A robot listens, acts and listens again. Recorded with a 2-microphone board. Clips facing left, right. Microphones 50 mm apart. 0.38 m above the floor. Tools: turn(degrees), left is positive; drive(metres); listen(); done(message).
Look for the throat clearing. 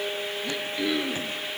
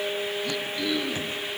turn(degrees=20)
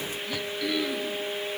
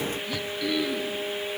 done("Found it: throat clearing, straight ahead, 2 to 4 m away.")